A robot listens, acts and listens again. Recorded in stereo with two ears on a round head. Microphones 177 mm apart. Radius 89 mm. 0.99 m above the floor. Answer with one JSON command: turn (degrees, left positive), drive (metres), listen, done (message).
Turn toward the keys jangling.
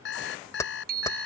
{"turn": 15}
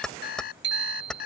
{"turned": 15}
{"turn": 30}
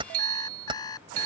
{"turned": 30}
{"turn": -25}
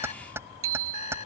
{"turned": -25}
{"turn": -10}
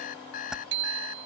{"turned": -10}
{"done": "Facing the keys jangling."}